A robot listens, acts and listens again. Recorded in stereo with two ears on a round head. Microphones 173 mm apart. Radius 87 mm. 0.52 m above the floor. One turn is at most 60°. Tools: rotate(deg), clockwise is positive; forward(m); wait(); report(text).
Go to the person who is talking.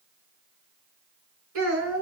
rotate(60)
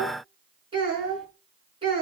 rotate(25)
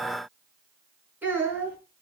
rotate(10)
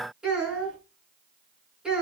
forward(1.0)
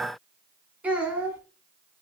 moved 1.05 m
rotate(10)
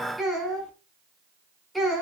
forward(1.0)
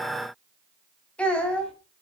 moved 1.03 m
forward(1.0)
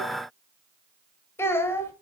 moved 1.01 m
rotate(-15)
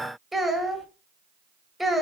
forward(1.0)
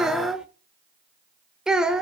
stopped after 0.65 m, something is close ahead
report("I am next to the child speaking.")